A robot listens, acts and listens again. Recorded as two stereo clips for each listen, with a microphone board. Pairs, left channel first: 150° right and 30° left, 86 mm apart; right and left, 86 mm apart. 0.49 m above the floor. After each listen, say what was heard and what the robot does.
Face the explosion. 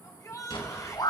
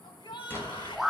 The explosion: 150° right. Turn 150° right.
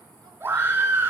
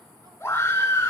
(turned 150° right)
Facing where the explosion came from. I can't hear it now.